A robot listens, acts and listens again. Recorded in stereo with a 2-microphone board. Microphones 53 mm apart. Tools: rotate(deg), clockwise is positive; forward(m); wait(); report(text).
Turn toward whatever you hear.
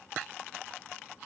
wait()
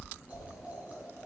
rotate(30)
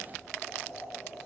report("Found it: boiling, straight ahead.")